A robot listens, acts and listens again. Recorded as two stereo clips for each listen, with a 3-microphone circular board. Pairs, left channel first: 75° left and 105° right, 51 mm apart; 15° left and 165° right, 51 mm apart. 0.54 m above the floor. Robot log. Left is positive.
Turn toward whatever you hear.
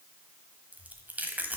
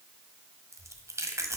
note: The chewing: 160° right.
cmd yaw -160
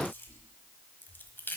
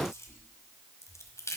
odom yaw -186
note: The chewing is now 30° left.
cmd yaw +30
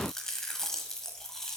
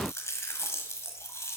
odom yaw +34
end: Facing the chewing, 1 to 2 m away.